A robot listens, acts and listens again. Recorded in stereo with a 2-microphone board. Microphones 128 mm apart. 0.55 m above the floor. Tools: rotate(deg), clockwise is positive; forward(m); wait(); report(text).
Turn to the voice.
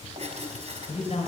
rotate(-60)
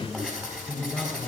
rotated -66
report("Found it: a man speaking, straight ahead, 2 to 4 m away.")